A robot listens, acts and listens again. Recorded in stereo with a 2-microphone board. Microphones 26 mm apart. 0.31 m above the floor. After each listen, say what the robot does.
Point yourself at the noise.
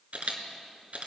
Turn 70° right.
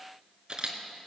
Turn 35° right.
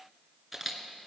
Facing the camera shutter.